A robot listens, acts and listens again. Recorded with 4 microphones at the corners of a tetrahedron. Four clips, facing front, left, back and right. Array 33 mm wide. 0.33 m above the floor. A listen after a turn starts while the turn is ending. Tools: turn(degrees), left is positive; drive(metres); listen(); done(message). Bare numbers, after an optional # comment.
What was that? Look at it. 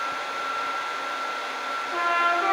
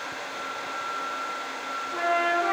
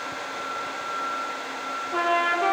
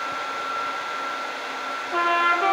# The trumpet: 95° right.
turn(-95)
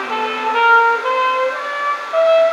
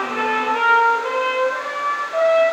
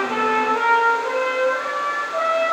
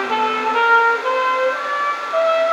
# The trumpet is now 20° right.
turn(-20)
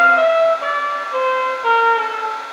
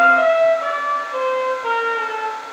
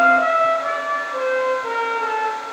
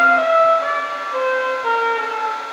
done("Found it: a trumpet, straight ahead.")